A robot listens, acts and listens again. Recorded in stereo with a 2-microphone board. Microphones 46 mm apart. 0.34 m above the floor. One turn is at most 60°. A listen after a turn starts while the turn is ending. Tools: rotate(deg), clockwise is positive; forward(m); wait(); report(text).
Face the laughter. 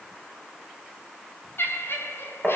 rotate(-60)
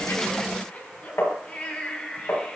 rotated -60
rotate(-25)
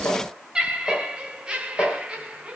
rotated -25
rotate(30)
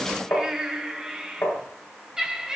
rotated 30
rotate(15)
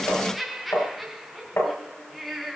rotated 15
report("Found it: laughter, straight ahead.")